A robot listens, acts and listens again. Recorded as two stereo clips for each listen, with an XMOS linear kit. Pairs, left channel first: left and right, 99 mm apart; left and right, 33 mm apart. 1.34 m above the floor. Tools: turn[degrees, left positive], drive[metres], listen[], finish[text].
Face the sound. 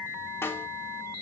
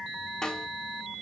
Thought: The snare drum: about 25° left or 155° left.
Action: turn[25]
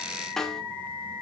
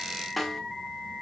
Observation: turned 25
Action: finish[Facing the snare drum, 1 to 2 m away.]